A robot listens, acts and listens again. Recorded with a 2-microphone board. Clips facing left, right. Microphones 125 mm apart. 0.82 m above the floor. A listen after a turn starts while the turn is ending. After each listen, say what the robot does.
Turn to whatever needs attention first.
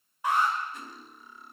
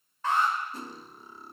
Turn 30° left.
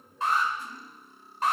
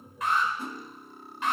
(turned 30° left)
Turn 140° left.
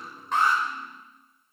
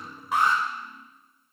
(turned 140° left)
Turn 25° right.
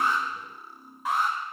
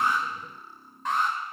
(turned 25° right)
Turn 10° left.
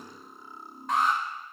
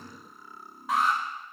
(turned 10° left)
Found it: an alarm, straight ahead, over 4 m away.